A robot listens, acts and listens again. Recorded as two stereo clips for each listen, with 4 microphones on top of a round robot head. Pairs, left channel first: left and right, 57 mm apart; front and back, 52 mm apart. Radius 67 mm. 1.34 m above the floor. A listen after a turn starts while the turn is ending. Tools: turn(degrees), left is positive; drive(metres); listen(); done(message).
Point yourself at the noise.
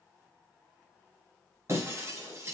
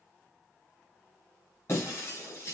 turn(degrees=-50)
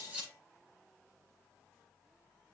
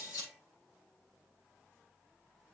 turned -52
done("I heard breaking glass from this way, but can't make it out now.")